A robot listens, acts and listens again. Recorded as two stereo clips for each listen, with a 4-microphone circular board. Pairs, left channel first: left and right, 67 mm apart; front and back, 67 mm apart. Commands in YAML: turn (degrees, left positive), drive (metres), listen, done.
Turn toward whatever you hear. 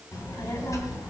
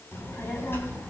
turn: 55
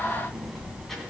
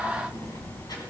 done: "Facing the child speaking, 2 to 4 m away."